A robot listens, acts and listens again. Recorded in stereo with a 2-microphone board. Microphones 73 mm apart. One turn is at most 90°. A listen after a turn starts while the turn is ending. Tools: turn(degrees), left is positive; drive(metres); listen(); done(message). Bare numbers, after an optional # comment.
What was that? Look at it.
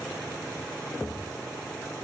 listen()
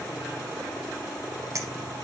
# The clink: about 45° right or 135° right.
turn(-45)
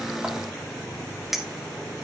done("Facing the clink, 1 to 2 m away.")